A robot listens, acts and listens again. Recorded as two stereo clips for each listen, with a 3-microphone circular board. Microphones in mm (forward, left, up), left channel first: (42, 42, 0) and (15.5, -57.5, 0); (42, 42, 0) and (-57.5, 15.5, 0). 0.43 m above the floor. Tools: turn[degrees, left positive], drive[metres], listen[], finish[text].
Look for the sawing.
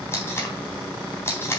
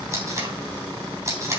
Action: listen[]
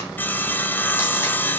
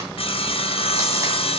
Action: finish[Found it: sawing, straight ahead, under 1 m away.]